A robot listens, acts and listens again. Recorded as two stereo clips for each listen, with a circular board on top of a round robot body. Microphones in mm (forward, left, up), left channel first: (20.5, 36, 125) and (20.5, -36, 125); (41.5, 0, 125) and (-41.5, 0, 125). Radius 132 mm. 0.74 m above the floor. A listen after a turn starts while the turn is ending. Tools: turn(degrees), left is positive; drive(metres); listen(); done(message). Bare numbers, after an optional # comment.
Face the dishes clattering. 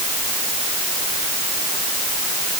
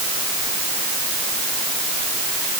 listen()
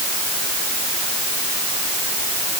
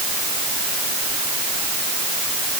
listen()
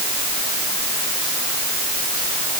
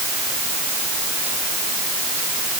done("I can't make out dishes clattering to turn to.")